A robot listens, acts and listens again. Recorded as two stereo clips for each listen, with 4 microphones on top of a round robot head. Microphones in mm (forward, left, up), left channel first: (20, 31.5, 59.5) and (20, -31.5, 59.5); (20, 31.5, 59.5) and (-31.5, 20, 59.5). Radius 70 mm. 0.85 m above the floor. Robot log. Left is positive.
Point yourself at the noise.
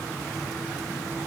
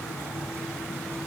cmd idle
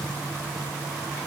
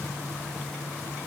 cmd idle
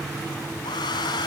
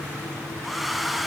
note: The hair dryer: 100° left.
cmd yaw +100
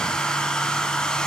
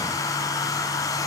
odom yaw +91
note: The hair dryer is now 10° left.
cmd yaw +10
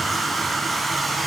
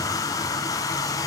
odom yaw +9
end: Found it: a hair dryer, straight ahead, 2 to 4 m away.